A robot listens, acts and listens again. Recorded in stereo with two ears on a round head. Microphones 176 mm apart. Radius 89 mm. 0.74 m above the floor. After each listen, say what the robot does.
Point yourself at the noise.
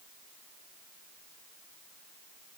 Keep listening.
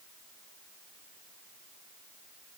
Keep listening.
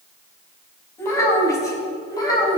Turn 20° left.
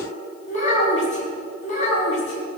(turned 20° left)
Turn 40° left.
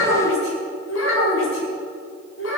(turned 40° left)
Turn 105° left.
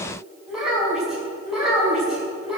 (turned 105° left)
Found it: a child speaking, straight ahead.